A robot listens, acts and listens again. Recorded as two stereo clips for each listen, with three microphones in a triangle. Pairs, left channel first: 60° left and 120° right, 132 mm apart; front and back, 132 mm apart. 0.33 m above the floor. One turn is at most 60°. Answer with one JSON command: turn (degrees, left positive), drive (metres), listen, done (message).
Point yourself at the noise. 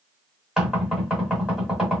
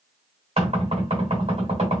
{"turn": 60}
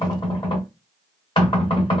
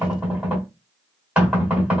{"turn": 60}
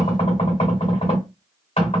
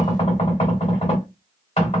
{"turn": 30}
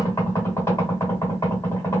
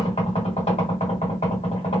{"done": "Found it: knocking, straight ahead, 2 to 4 m away."}